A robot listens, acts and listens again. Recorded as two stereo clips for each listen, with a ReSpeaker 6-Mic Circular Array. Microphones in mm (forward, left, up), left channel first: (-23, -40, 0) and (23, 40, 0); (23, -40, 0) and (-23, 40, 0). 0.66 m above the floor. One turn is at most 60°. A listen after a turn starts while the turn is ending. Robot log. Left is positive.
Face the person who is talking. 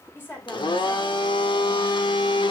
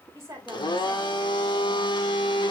note: The woman speaking: 175° left.
cmd yaw +60
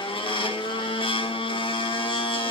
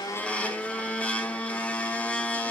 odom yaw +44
note: Nothing new. It was at 130° left.
cmd yaw +60
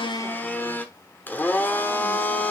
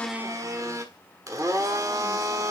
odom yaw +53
note: Nothing new. It was at 80° left.
cmd yaw +60
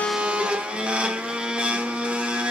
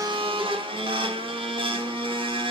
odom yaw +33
note: Nothing new. It was at 45° left.
cmd yaw +45
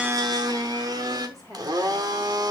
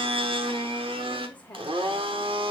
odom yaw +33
note: The woman speaking is now 10° left.
cmd yaw +10
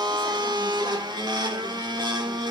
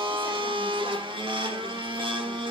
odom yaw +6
cmd idle
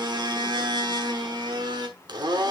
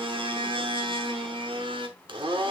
cmd idle
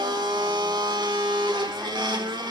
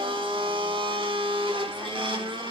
end: I heard a woman speaking from this way, but can't make it out now.